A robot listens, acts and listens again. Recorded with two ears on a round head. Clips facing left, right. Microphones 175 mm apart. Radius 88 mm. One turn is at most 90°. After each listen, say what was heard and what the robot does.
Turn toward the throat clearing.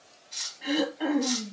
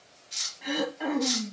Turn 30° left.
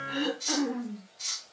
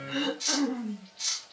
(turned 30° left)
So it is at 30° right. Turn 30° right.
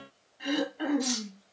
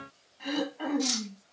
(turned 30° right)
The throat clearing is now 10° left. Turn 10° left.
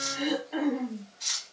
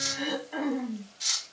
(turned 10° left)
Found it: throat clearing, straight ahead.